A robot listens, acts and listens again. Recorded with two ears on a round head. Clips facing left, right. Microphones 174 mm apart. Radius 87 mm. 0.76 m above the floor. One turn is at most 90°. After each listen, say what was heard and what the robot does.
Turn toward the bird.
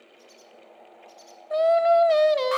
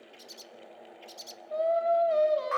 The bird: about 50° right or 130° right. Turn 50° right.
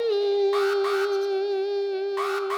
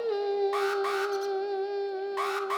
Keep listening.
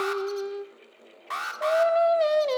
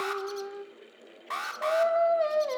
Keep listening.
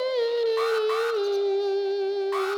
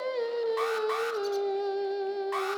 I heard a bird, but can't make it out now. It was about straight ahead or 80° right.